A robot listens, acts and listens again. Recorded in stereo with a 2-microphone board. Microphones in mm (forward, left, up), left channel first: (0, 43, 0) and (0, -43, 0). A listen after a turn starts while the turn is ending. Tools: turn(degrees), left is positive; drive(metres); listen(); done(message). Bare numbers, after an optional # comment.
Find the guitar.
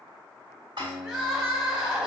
turn(30)
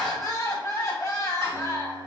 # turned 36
listen()
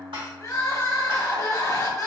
# So it is at 25° right.
turn(-25)
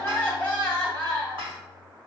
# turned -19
# The guitar is now 10° right.
turn(-10)
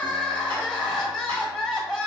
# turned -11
listen()
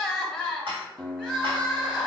done("Found it: a guitar, straight ahead.")